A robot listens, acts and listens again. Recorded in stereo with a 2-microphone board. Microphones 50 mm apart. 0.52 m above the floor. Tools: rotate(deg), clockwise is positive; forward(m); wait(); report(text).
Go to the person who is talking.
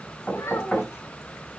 rotate(-90)
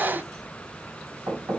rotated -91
wait()
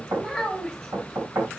forward(1.0)
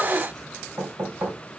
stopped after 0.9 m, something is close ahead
wait()
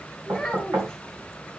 report("Blocked. The child speaking is further on, straight ahead.")